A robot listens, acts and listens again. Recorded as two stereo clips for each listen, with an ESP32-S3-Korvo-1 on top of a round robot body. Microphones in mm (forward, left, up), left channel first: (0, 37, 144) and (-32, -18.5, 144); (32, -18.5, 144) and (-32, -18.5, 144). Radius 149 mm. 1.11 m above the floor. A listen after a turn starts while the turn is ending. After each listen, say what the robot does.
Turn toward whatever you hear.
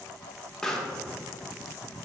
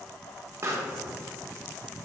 Turn 140° left.
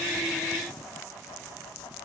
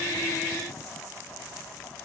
I heard a pop from this way, but can't make it out now.